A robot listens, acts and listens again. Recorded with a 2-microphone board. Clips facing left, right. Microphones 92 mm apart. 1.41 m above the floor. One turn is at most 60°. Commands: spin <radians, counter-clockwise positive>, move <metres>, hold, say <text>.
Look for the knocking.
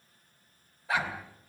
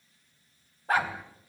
spin 0.52
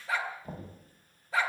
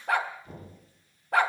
spin 1.05
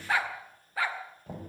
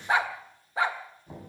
spin 1.05
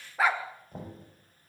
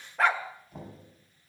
spin 0.70
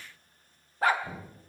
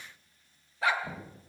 say Facing the knocking, over 4 m away.